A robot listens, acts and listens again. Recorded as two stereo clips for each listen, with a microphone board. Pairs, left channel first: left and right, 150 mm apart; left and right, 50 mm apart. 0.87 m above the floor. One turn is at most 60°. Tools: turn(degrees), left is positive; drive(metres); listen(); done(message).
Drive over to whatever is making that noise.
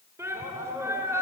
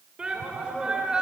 turn(degrees=-20)
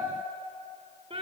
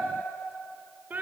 turn(degrees=-60)
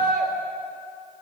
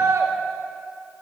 turn(degrees=-60)
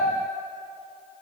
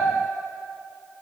turn(degrees=-30)
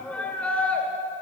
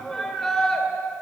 turn(degrees=10)
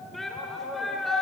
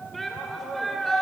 drive(metres=1.0)
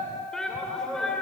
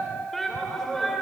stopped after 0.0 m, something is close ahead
done("Something is in my way. I am facing the shout but have not reached it.")